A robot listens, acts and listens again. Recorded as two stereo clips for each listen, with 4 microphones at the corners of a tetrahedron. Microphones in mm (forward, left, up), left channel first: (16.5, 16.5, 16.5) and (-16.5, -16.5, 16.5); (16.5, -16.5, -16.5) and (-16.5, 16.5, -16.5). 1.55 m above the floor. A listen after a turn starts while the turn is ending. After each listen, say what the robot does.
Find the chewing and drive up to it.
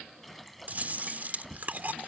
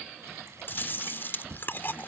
Turn 85° right.
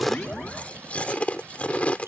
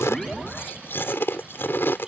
Turn 15° right.
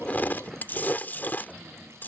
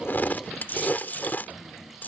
Drive 1.0 m forward.
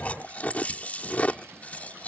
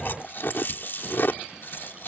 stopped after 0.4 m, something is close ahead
Turn 10° right.
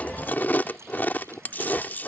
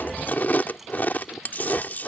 Something is in my way. I am facing the chewing but have not reached it.